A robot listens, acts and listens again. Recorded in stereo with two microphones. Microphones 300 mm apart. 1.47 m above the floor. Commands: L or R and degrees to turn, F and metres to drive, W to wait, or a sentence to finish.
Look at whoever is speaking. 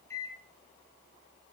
W
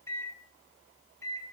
W
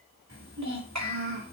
R65
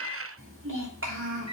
R45
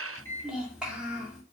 Facing the child speaking.